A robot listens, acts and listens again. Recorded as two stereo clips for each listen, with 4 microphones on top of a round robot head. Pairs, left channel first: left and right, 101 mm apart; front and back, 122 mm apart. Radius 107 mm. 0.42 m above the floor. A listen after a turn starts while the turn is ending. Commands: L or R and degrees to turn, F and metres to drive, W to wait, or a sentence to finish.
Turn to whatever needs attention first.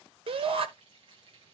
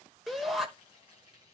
R90
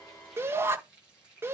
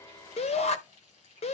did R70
R20
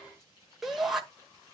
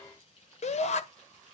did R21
Facing the shout, 1 to 2 m away.